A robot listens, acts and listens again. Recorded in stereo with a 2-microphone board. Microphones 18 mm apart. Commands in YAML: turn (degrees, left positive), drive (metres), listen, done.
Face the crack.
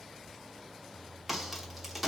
turn: -30
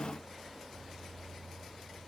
listen: true
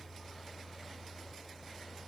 done: "I heard a crack, but can't make it out now. It was about 20° left or 140° right."